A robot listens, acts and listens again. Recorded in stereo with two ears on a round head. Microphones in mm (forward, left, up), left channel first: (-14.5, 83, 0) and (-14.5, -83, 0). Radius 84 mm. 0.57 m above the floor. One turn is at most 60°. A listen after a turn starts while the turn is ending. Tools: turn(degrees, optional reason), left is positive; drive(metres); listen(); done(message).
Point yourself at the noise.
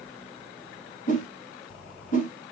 turn(degrees=45, reason="The whoosh: about 45° left or 135° left.")
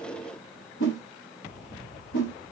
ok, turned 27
turn(degrees=60, reason="So it is at 105° left.")
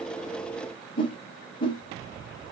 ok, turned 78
turn(degrees=30, reason="The whoosh is now 30° left.")
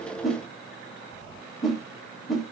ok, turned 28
done("Facing the whoosh.")